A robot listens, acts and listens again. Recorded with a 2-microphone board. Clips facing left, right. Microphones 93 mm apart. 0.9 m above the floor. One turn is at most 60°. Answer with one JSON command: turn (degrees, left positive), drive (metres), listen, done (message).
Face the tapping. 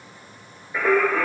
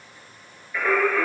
{"listen": true}
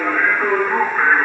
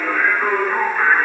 {"listen": true}
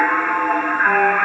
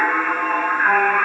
{"done": "I can't make out tapping to turn to."}